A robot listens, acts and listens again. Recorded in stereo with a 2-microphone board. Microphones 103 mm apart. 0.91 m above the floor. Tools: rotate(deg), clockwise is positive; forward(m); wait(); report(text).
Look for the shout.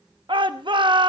rotate(50)
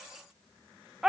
report("Facing the shout.")